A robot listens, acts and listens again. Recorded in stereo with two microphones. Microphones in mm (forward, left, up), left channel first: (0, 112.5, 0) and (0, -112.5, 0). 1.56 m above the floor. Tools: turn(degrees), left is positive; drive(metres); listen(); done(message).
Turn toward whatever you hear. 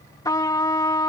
turn(degrees=15)
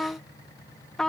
done("Facing the trumpet.")